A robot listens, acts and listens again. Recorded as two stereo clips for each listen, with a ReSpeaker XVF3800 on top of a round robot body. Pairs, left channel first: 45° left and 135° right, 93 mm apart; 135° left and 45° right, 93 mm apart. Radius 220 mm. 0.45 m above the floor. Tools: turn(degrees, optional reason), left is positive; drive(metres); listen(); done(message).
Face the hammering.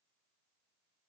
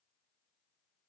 listen()
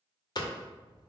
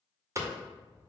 turn(degrees=10, reason="The hammering: 10° left.")
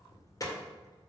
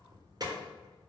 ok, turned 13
done("Facing the hammering.")